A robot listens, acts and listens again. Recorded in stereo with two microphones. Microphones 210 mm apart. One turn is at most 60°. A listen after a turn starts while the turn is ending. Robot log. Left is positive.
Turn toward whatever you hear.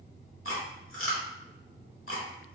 cmd yaw +60
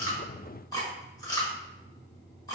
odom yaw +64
note: So it is at 15° left.
cmd yaw +15
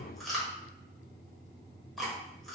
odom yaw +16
end: Facing the chewing, 1 to 2 m away.